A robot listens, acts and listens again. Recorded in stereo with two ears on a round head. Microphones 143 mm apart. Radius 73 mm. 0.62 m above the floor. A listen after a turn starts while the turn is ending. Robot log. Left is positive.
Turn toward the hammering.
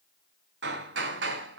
cmd yaw -90
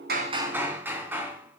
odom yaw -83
note: So it is at 10° right.
cmd yaw -10
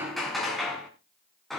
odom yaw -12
end: Found it: hammering, straight ahead, 2 to 4 m away.